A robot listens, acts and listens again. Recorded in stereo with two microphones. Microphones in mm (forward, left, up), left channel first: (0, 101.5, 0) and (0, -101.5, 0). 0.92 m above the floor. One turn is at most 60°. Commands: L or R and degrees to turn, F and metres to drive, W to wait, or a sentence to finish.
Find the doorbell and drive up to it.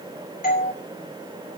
L45
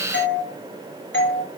L60
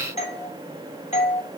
L35
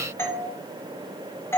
L15
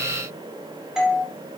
F1.0
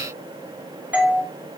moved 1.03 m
R10
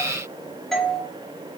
F1.0
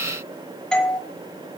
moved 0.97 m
F1.0
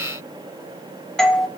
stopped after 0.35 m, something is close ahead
I am next to the doorbell.